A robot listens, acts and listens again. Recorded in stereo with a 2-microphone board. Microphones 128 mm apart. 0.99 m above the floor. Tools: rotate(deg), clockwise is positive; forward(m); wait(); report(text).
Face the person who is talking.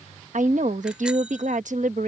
rotate(75)
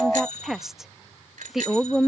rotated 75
report("Facing the woman speaking.")